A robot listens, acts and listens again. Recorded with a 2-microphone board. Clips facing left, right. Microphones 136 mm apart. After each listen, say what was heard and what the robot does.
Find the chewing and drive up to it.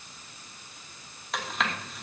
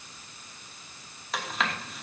Turn 30° left.
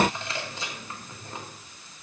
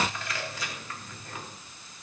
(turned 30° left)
So it is at 155° left. Turn 155° left.
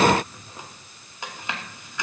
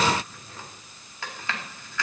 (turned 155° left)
The chewing is now 20° left. Turn 20° left.
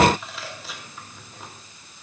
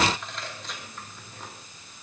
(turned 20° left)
Drive 1.0 m forward.
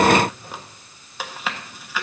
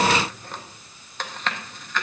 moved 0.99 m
The chewing is now 10° left. Turn 10° left.
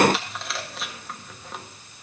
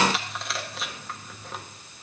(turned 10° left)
Drive 1.0 m forward.
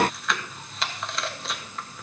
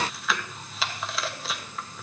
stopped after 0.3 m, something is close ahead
I am next to the chewing.